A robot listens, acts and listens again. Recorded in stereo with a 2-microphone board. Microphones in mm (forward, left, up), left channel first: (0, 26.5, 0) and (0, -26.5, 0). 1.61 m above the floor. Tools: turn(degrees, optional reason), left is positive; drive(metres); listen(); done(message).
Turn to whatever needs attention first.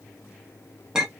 listen()
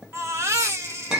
turn(degrees=-60, reason="The baby crying: about 60° right or 120° right.")
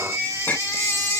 turn(degrees=-65, reason="So it is at 65° right.")
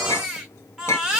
turn(degrees=-15, reason="The baby crying is now 15° right.")
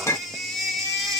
done("Found it: a baby crying, straight ahead.")